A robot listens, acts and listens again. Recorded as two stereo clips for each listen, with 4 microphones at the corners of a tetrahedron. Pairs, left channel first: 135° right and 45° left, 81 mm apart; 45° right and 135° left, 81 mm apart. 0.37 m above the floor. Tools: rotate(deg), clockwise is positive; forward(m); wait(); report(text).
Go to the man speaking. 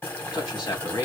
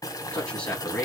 rotate(120)
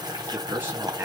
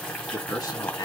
rotate(15)
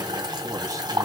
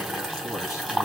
wait()
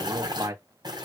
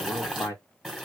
forward(1.0)
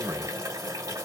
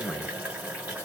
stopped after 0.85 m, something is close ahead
rotate(-10)
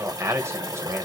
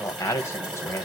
report("Arrived at the man speaking, straight ahead.")